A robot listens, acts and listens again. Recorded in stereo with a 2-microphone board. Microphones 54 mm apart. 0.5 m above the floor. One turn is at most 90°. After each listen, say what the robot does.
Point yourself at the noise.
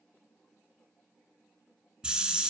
Turn 20° right.
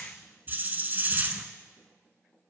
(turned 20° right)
Turn 90° right.
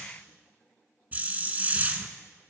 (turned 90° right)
Turn 35° right.
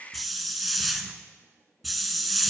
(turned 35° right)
Found it: a hiss, straight ahead.